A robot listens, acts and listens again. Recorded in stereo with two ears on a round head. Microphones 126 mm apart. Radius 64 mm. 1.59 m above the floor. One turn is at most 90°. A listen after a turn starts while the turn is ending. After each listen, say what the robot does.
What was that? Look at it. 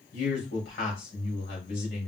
Turn 90° left.
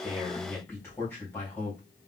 Turn 15° left.
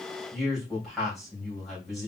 Found it: a man speaking, straight ahead, 2 to 4 m away.